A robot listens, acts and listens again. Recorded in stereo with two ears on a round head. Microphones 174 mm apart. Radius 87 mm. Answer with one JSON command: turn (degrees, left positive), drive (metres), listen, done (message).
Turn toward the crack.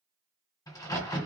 {"turn": 20}
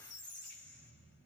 {"listen": true}
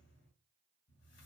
{"done": "I heard a crack, but can't make it out now. It was about straight ahead or 140° left."}